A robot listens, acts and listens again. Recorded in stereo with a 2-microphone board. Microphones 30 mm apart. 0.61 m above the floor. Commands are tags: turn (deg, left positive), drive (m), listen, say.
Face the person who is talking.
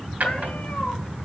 <listen/>
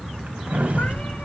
<turn deg="-45"/>
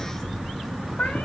<say>Found it: a child speaking, straight ahead.</say>